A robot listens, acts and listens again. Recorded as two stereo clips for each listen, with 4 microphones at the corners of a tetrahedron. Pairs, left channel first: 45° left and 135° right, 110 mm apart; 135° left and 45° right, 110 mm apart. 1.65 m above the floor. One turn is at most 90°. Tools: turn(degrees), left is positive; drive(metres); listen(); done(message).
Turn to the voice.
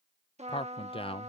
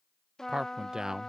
turn(degrees=35)
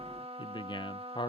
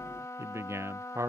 turn(degrees=15)
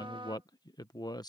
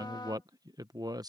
done("Facing the man speaking.")